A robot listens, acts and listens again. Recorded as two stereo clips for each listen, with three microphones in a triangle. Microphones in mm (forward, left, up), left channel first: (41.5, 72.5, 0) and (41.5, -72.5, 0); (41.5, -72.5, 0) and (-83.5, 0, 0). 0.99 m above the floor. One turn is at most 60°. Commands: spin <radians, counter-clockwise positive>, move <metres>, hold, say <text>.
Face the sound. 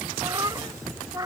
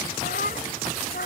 spin -0.35
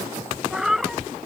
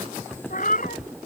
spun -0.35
say Facing the cat meowing.